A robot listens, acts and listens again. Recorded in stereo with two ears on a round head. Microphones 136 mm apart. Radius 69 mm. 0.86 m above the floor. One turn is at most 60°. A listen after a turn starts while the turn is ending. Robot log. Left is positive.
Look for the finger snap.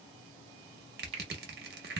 note: The finger snap: about 45° right or 135° right.
cmd yaw -45
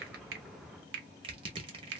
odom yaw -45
note: So it is at 90° right.
cmd yaw -60
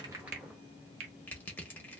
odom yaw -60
note: The finger snap is now 40° right.
cmd yaw -40
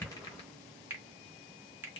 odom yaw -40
note: The finger snap is now 15° right.
cmd yaw -15
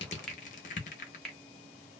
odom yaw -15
end: Facing the finger snap.